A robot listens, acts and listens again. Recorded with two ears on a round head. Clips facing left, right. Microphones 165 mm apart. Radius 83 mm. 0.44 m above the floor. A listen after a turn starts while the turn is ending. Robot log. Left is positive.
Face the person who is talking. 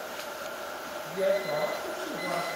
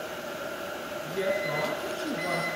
cmd yaw -90
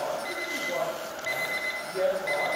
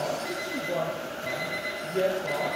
note: So it is at 10° right.
cmd yaw -10
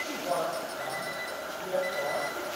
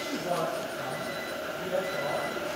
end: Found it: a woman speaking, straight ahead, over 4 m away.